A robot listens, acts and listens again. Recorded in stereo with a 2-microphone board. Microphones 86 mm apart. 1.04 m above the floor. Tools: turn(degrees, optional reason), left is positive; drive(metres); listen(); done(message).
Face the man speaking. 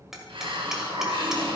listen()
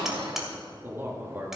turn(degrees=-20, reason="The man speaking: about 20° right or 160° right.")
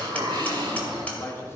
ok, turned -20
turn(degrees=30, reason="So it is at 30° left.")
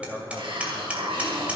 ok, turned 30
turn(degrees=15, reason="The man speaking is now 15° left.")
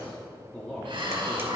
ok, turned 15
turn(degrees=15, reason="The man speaking is now 15° left.")
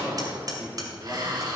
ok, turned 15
done("Facing the man speaking, 2 to 4 m away.")